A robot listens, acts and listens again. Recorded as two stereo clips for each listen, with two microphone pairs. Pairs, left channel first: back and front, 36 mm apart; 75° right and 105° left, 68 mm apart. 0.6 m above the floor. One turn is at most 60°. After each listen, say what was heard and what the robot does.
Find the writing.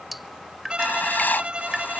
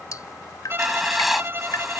The writing: 165° right. Turn 60° right.
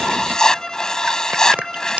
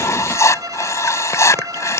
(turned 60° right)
The writing is now 110° right. Turn 60° right.
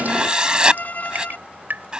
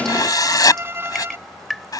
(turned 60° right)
The writing is now 65° right. Turn 60° right.
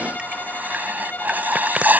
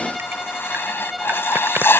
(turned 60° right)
The writing is now 25° right. Turn 25° right.
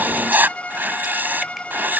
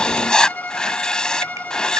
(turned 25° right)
Found it: writing, straight ahead.